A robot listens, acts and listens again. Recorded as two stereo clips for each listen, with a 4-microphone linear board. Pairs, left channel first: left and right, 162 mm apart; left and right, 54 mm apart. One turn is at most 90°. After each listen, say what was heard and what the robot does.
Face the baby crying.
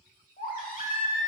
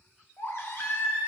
The baby crying: about 60° left or 120° left. Turn 60° left.
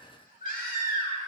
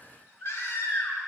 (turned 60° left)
So it is at 60° left. Turn 60° left.
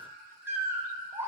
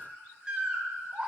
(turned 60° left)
The baby crying is now 15° right. Turn 15° right.
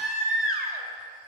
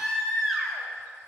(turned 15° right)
Facing the baby crying.